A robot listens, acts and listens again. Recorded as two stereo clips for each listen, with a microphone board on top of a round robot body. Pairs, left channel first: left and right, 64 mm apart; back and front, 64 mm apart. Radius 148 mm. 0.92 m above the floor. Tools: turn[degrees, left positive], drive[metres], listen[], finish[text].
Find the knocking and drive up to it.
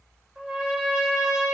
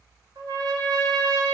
Action: listen[]
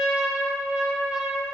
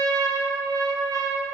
Action: listen[]
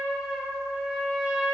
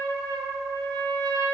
Action: finish[I can't make out knocking to turn to.]